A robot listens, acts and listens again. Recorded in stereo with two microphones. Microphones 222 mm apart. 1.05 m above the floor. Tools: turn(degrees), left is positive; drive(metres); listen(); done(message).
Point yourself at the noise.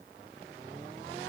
listen()
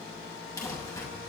turn(degrees=30)
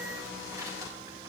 turn(degrees=-15)
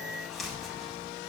done("Facing the crumpling.")